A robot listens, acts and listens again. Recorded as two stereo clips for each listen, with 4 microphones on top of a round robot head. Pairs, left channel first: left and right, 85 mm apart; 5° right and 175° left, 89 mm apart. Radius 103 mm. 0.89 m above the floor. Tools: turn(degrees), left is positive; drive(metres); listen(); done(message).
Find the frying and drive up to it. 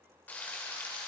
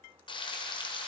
turn(degrees=15)
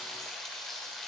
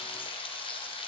drive(metres=1.0)
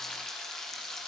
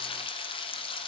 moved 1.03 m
drive(metres=1.0)
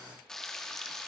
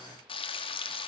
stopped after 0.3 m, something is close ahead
done("I am next to the frying.")